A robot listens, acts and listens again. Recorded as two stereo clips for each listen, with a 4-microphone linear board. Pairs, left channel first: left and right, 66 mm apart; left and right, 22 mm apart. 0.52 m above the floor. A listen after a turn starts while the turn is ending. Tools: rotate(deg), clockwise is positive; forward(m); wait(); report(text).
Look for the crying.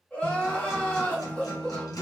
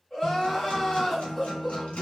rotate(-20)
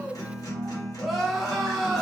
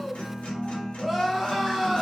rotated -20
report("Facing the crying, under 1 m away.")